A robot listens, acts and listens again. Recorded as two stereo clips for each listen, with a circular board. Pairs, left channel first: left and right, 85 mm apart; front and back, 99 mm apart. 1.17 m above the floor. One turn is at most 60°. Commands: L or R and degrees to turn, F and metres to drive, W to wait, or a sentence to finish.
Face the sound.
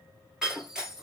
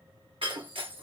R60
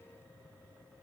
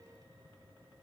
R60
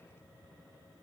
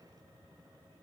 R55
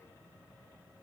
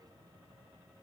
I heard breaking glass from this way, but can't make it out now.